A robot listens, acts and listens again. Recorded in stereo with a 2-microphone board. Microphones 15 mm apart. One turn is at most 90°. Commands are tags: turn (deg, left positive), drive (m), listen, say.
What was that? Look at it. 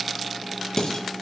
<turn deg="45"/>
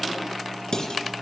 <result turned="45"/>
<turn deg="90"/>
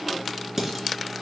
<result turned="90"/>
<turn deg="-20"/>
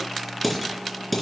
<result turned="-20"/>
<say>Facing the dishes clattering, 2 to 4 m away.</say>